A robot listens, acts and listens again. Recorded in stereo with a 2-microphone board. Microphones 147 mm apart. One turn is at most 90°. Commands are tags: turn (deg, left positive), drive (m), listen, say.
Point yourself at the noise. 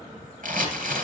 <turn deg="-65"/>
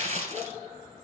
<turn deg="-50"/>
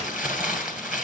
<turn deg="-10"/>
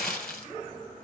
<say>Found it: crumpling, straight ahead, 2 to 4 m away.</say>